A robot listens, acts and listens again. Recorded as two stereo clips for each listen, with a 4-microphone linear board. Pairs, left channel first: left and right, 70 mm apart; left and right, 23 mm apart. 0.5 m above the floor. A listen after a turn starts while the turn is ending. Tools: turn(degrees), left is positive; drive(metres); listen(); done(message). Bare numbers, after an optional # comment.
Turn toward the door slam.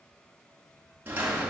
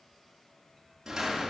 # The door slam: about 25° right or 155° right.
turn(-25)
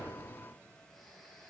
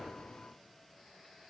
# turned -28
listen()
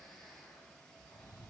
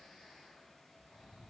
done("I heard a door slam, but can't make it out now. It was about 5° left or 130° right.")